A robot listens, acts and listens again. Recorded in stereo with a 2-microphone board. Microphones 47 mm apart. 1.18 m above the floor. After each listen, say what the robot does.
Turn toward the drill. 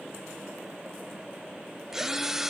Turn 30° right.
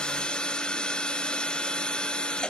Turn 20° left.
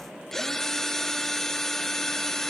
Found it: a drill, straight ahead, 1 to 2 m away.